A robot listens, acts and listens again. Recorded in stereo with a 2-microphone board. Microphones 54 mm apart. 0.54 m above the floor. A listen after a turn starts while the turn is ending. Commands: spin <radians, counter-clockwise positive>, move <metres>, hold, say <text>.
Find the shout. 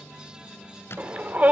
spin -0.52
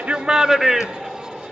say Found it: a shout, straight ahead.